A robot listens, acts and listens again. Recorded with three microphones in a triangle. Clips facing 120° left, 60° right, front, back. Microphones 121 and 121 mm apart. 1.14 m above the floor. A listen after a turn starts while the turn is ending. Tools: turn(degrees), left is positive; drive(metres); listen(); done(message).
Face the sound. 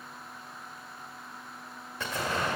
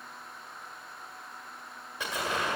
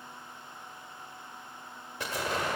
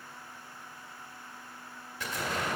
turn(degrees=15)
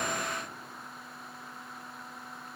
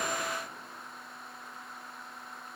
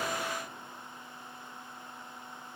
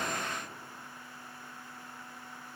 done("I heard an explosion from this way, but can't make it out now.")